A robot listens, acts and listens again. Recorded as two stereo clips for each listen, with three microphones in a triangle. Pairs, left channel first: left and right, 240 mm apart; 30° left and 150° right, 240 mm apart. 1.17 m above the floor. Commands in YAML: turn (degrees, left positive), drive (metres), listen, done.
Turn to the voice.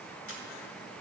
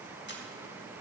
listen: true
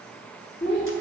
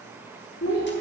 turn: 45
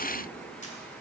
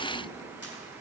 listen: true
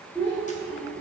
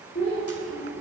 turn: 20
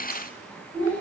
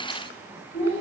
done: "Facing the child speaking."